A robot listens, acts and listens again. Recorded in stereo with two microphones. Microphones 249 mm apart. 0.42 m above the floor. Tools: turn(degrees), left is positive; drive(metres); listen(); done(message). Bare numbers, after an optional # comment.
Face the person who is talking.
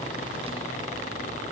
listen()
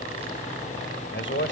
# The man speaking: about 50° left or 130° left.
turn(50)
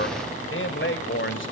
# So it is at 70° left.
turn(70)
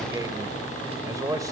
# The man speaking is now 15° right.
turn(-15)
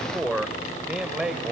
done("Facing the man speaking, 1 to 2 m away.")